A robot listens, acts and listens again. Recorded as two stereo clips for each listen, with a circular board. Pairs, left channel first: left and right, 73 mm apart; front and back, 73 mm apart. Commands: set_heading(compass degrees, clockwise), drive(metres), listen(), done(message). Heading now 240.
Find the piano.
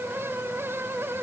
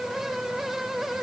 listen()
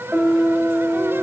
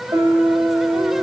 set_heading(40)
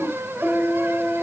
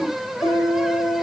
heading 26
set_heading(36)
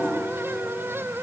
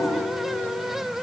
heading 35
listen()
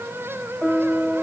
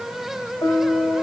done("Facing the piano, 1 to 2 m away.")